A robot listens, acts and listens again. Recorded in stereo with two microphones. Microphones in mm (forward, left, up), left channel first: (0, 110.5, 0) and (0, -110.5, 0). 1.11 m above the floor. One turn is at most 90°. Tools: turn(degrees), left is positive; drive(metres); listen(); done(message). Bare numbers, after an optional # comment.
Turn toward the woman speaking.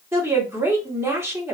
turn(-30)
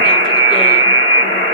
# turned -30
listen()
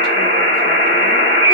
listen()
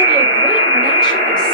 done("I heard a woman speaking, but can't make it out now. It was about 20° left or 140° right.")